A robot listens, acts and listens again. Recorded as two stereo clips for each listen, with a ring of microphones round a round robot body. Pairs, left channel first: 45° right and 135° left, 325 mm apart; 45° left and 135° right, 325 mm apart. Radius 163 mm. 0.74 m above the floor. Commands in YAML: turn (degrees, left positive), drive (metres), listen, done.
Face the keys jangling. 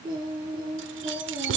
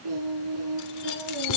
turn: 80
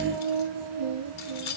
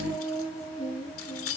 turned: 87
done: "Found it: keys jangling, straight ahead."